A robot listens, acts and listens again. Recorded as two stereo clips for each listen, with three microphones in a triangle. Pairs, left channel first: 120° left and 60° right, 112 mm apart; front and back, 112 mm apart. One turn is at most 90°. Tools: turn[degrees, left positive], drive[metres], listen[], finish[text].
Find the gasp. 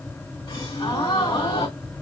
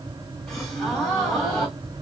Thought: The gasp: 85° left.
Action: turn[85]
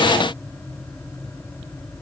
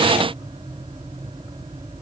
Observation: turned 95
Thought: Nothing new. It was at 10° right.
Action: turn[-10]
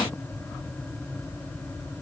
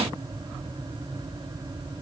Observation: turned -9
Action: finish[Facing where the gasp came from. I can't hear it now.]